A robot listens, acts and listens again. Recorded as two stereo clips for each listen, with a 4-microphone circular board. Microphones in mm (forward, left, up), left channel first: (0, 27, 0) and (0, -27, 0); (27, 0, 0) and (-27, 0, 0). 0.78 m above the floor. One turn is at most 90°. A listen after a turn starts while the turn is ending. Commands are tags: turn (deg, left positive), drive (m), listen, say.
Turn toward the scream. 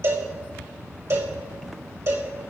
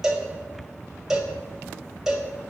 <listen/>
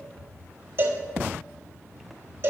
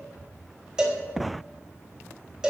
<listen/>
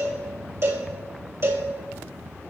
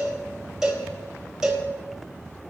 <say>I can't make out a scream to turn to.</say>